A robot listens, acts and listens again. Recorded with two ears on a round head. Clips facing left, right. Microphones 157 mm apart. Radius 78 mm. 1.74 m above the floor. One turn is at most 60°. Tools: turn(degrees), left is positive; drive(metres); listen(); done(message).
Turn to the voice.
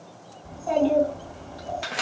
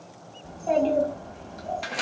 turn(degrees=-25)
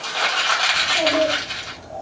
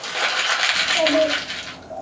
turn(degrees=-60)
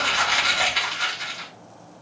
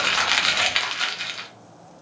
turn(degrees=-60)
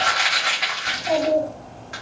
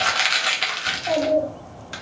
turn(degrees=-10)
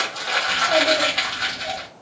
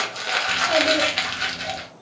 done("Facing the child speaking.")